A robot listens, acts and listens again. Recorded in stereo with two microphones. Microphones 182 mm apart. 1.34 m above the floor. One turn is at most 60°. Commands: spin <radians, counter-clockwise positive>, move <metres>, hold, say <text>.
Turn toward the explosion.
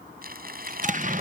spin -0.87
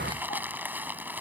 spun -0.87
hold
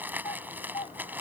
say I heard an explosion, but can't make it out now. It was about straight ahead or 80° right.